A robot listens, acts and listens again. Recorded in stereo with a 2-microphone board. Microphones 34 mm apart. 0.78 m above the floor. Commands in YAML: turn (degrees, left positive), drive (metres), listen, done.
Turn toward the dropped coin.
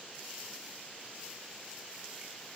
listen: true
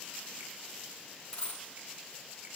turn: 30
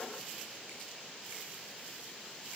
listen: true
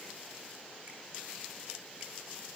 done: "I heard a dropped coin, but can't make it out now. It was about straight ahead or 120° left."